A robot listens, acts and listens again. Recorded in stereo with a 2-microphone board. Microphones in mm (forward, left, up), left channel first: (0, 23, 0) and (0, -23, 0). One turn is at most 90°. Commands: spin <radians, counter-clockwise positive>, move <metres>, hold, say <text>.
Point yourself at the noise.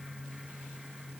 hold
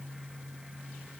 hold
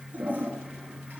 spin -0.79
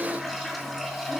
say Found it: a toilet flushing, straight ahead, 2 to 4 m away.